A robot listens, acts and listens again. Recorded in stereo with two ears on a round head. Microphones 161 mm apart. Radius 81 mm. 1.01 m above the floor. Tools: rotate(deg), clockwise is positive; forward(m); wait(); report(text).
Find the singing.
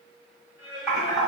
rotate(-65)
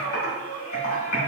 rotate(-50)
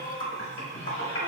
rotate(-35)
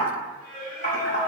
rotate(-40)
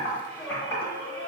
rotate(-10)
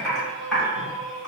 report("Found it: singing, straight ahead, 1 to 2 m away.")